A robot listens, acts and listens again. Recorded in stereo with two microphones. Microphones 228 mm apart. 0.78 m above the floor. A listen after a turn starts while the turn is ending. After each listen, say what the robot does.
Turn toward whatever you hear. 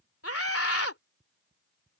Turn 75° left.
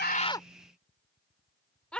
Found it: a scream, straight ahead.